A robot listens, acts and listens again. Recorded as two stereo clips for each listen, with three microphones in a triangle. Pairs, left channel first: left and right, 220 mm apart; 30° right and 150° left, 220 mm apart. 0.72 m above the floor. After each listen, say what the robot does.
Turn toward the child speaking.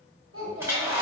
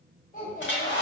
Turn 85° right.
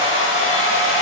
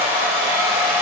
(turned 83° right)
Keep listening.
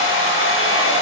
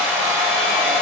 Keep listening.
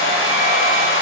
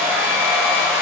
Facing where the child speaking came from. I can't hear it now.